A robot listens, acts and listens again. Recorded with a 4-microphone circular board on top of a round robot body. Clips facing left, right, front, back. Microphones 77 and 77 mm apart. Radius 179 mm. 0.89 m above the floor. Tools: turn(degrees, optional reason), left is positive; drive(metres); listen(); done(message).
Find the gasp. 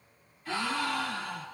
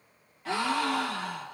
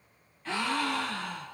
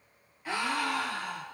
turn(degrees=-100, reason="The gasp: 100° right.")
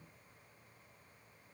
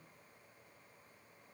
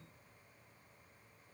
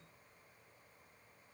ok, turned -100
done("I heard a gasp from this way, but can't make it out now.")